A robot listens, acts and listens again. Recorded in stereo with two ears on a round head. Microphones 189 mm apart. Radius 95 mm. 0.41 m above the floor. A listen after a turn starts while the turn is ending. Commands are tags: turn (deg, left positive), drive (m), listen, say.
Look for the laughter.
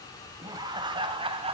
<turn deg="-30"/>
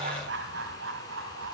<turn deg="-115"/>
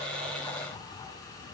<listen/>
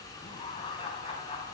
<turn deg="25"/>
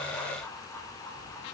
<turn deg="10"/>
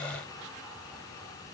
<listen/>
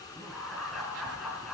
<say>Found it: laughter, straight ahead, over 4 m away.</say>